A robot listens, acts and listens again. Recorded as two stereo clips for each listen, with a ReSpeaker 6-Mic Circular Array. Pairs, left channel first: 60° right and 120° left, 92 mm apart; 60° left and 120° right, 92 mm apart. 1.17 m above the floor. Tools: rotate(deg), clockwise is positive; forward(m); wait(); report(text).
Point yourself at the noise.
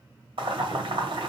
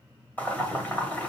rotate(-130)
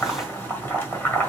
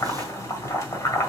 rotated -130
report("Found it: boiling, straight ahead, 1 to 2 m away.")